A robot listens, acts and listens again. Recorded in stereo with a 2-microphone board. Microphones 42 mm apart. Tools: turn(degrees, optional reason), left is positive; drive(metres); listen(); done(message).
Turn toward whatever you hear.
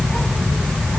listen()
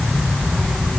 listen()
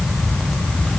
done("I can't make out anything to turn to.")